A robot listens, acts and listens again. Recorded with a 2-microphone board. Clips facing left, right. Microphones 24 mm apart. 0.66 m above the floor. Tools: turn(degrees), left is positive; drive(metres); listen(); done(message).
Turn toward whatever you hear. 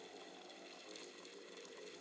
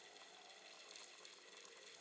listen()
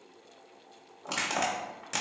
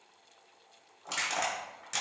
turn(degrees=30)
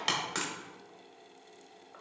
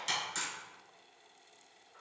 turn(degrees=140)
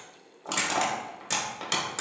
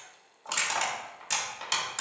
done("Found it: crushing, straight ahead, under 1 m away.")